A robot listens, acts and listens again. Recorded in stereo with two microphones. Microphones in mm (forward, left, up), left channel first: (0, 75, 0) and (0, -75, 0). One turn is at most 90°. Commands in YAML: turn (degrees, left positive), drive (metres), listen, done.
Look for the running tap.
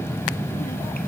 listen: true
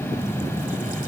listen: true
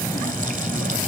done: "I can't make out a running tap to turn to."